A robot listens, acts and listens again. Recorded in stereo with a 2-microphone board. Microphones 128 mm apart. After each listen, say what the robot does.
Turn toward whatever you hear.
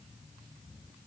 Keep listening.
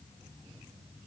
Keep listening.
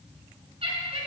Turn 50° right.
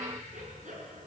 Turn 75° right.
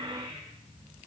Keep listening.
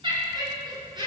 Turn 35° right.
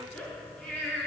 Turn 10° left.
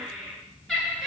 Facing the laughter, over 4 m away.